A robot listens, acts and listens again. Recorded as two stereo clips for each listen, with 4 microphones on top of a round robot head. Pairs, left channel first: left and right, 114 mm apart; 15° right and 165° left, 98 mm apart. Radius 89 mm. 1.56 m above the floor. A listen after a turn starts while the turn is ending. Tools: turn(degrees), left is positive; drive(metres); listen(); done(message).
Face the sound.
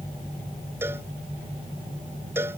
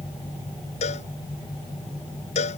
turn(degrees=-15)
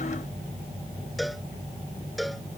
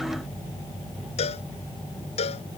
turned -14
done("Facing the cowbell.")